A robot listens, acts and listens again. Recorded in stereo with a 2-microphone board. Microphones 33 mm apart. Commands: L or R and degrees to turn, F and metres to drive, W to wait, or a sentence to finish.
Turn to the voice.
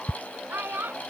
R90
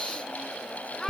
L15
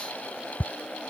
W
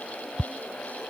W
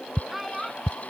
Facing the child speaking.